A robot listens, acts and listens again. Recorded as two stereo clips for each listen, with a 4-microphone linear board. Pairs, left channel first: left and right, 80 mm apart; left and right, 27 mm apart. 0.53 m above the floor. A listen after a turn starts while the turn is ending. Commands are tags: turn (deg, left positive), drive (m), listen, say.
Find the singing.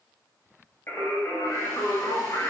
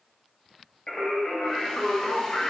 <turn deg="45"/>
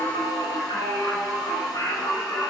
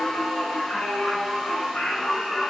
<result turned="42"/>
<turn deg="55"/>
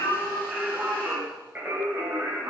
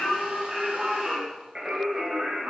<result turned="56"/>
<turn deg="-30"/>
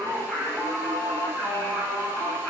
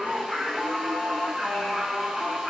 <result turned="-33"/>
<say>Facing the singing.</say>